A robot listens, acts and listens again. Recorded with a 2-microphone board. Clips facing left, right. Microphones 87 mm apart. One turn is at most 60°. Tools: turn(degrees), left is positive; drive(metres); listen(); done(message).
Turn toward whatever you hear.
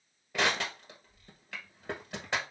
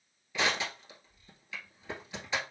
turn(degrees=60)
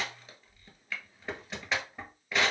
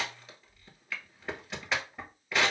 done("Found it: crushing, straight ahead, 1 to 2 m away.")